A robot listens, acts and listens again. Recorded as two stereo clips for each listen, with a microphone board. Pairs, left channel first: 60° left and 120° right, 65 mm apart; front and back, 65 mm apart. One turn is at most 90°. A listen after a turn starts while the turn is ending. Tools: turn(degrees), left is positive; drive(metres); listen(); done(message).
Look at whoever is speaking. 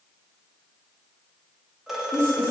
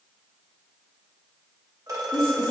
done("Found it: a woman speaking, straight ahead, 1 to 2 m away.")